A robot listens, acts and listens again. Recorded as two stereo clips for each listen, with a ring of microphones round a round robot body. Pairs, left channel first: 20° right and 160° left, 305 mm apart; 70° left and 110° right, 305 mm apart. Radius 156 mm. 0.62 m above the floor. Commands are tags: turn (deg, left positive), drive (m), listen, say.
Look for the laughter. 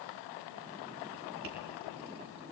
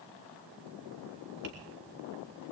<listen/>
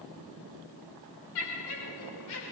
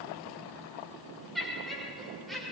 <turn deg="-20"/>
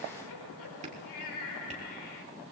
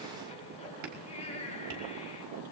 <say>Found it: laughter, straight ahead.</say>